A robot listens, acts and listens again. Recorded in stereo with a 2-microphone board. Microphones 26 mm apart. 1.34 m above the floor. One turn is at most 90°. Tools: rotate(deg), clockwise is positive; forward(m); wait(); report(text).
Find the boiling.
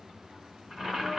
rotate(15)
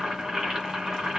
rotate(90)
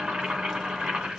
rotate(60)
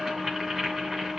rotate(20)
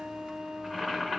report("Facing the boiling.")